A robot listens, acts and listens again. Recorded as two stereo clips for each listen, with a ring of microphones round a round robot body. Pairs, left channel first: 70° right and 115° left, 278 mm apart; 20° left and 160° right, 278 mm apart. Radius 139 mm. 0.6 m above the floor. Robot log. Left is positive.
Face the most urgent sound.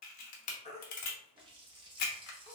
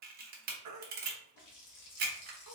note: The baby crying: 135° right.
cmd yaw -135
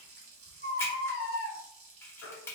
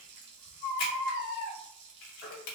note: The baby crying is now 25° right.
cmd yaw -25
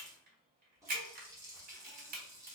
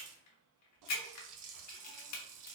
cmd idle
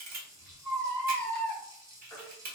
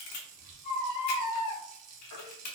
note: The baby crying is now 15° left.
cmd yaw +15
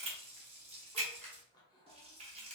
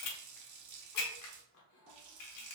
cmd idle
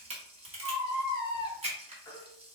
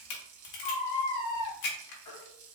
end: Facing the baby crying.